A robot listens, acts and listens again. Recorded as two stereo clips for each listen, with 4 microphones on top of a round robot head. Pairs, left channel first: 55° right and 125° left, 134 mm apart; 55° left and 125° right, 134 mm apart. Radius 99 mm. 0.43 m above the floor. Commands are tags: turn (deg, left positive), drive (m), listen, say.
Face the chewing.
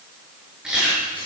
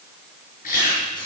<turn deg="40"/>
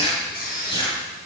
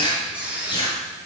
<say>Facing the chewing.</say>